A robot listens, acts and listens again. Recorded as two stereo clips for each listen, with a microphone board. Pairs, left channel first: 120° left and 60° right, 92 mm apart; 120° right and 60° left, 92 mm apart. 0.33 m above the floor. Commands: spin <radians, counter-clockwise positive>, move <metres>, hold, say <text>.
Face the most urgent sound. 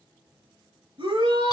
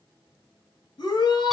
spin -1.40
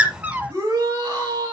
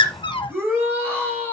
say Found it: a shout, straight ahead.